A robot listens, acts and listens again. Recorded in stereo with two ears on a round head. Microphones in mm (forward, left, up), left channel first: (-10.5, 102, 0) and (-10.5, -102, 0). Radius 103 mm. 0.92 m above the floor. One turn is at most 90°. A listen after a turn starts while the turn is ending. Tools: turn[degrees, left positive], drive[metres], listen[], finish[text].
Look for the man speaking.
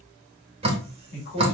Thought: The man speaking: about 45° left or 135° left.
Action: turn[45]
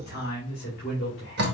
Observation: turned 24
Thought: The man speaking: about 55° left or 125° left.
Action: turn[55]
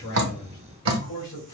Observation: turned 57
Thought: So it is at 75° left.
Action: turn[75]
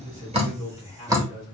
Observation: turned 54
Thought: The man speaking is now 25° left.
Action: turn[25]
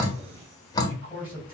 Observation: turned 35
Action: finish[Facing the man speaking, over 4 m away.]